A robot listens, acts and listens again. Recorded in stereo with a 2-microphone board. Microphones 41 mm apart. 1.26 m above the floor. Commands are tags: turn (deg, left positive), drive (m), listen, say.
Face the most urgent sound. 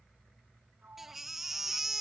<turn deg="-30"/>
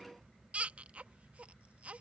<turn deg="-140"/>
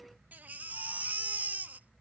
<turn deg="-50"/>
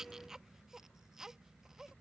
<turn deg="-15"/>
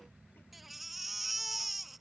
<say>Facing the baby crying.</say>